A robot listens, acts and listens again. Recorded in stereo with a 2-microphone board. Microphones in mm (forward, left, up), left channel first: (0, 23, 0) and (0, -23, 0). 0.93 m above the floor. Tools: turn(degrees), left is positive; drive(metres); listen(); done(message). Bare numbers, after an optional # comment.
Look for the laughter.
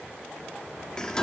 listen()
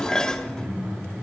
# The laughter: about 55° right or 125° right.
turn(-55)
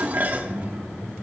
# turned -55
# So it is at 70° right.
turn(-70)
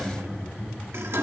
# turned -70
done("Facing the laughter, over 4 m away.")